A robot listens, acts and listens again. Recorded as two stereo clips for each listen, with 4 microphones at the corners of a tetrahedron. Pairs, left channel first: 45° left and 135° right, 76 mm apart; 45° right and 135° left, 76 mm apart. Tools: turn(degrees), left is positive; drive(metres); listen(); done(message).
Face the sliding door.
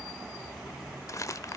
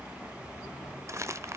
listen()
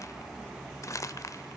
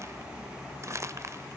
listen()
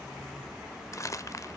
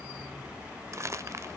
done("I can't make out a sliding door, only crumpling.")